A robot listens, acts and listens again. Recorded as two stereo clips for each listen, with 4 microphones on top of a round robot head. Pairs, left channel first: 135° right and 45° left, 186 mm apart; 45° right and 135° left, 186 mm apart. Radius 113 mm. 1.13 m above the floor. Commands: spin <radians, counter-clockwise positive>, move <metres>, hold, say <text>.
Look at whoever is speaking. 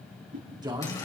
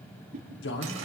spin -0.35
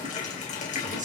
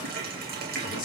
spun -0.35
say Found it: a man speaking, straight ahead.